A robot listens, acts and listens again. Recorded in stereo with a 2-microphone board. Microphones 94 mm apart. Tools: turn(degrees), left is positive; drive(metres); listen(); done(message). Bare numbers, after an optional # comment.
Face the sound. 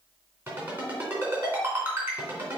# The ringtone: about 20° right or 160° right.
turn(-20)
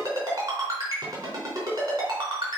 # So it is at 140° right.
turn(-140)
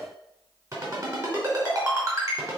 # The ringtone is now 40° right.
turn(-40)
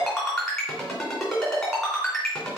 done("Facing the ringtone.")